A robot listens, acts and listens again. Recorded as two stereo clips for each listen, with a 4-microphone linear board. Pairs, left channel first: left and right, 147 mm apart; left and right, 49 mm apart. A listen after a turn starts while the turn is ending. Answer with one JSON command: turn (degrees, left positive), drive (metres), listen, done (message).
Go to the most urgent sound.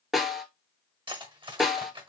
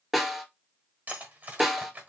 {"listen": true}
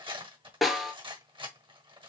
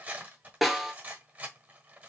{"listen": true}
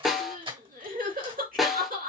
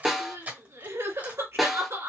{"turn": -90}
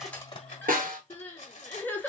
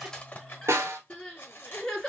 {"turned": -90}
{"turn": 10}
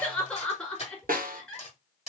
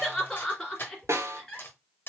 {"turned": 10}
{"drive": 1.0}
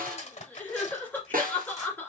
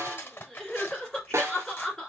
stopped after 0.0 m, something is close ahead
{"turn": 10}
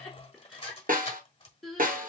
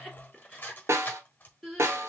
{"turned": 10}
{"done": "Blocked. The crying is further on, straight ahead."}